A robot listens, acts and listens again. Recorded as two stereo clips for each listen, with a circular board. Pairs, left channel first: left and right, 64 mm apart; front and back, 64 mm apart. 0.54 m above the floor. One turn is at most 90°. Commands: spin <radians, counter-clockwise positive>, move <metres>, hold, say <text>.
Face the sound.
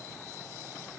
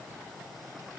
hold
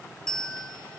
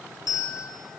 spin 0.17
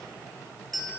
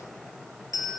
say Found it: a bell, straight ahead.